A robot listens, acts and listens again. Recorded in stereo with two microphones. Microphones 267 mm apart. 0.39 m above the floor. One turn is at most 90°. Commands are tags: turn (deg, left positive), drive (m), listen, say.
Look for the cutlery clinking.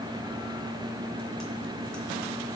<listen/>
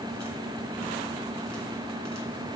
<listen/>
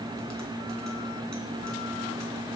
<say>I can't make out cutlery clinking to turn to.</say>